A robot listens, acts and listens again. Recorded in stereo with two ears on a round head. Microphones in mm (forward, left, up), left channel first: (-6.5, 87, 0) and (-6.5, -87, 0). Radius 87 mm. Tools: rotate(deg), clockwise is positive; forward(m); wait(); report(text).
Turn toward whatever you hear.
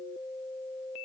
wait()
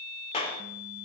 rotate(-30)
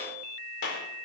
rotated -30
rotate(-115)
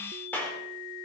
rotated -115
rotate(-10)
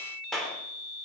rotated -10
report("Facing the clap.")